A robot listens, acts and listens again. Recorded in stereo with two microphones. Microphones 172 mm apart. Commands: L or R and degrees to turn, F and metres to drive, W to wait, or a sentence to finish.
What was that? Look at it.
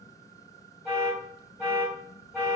L30
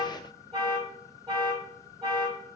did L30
R30
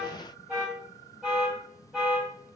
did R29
Facing the alarm.